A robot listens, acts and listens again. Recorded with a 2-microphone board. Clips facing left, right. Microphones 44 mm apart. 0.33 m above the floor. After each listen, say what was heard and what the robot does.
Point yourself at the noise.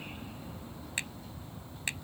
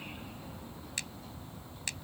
The finger snap: about 25° left or 155° left. Turn 25° left.
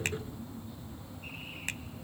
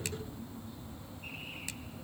Keep listening.
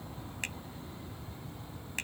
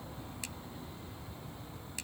Keep listening.
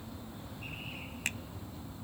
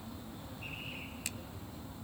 So it is at 125° left. Turn 125° left.
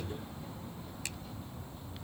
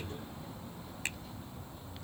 Keep listening.
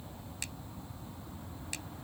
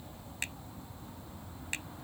Keep listening.
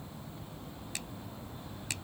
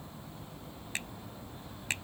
The finger snap is now 40° right. Turn 40° right.
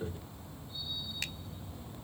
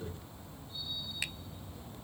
Keep listening.
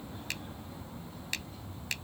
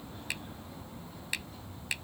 The finger snap is now 10° right. Turn 10° right.
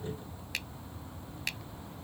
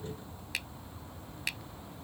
Found it: a finger snap, straight ahead.